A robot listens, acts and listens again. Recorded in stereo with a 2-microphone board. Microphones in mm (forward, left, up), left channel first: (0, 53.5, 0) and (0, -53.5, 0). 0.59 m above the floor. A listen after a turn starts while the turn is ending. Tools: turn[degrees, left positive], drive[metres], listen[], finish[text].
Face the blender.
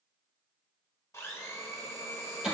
Thought: The blender: about 25° left or 155° left.
Action: turn[25]
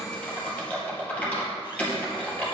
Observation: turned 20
Action: listen[]
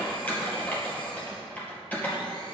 Action: listen[]
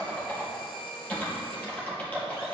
Thought: So it is at 135° left.
Action: turn[135]
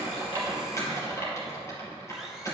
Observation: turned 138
Action: listen[]
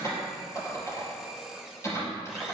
Action: finish[Found it: a blender, straight ahead, 1 to 2 m away.]